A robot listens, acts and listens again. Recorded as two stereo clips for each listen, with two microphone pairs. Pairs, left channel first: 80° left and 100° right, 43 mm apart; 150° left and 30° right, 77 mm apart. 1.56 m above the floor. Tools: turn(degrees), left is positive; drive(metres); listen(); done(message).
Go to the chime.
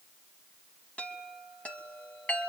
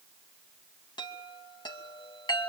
turn(degrees=140)
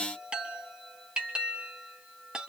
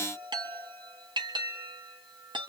turn(degrees=-30)
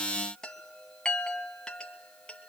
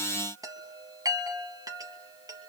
turn(degrees=10)
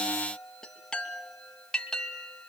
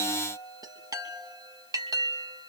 drive(metres=1.0)
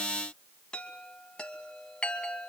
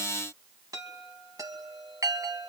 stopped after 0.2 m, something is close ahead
turn(degrees=15)
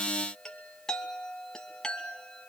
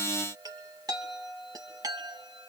done("Something is in my way. I am facing the chime but have not reached it.")